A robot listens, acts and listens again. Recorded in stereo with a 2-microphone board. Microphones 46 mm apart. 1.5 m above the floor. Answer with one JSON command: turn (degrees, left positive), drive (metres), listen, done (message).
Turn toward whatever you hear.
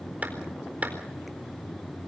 {"turn": -30}
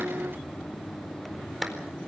{"done": "Found it: a clap, straight ahead."}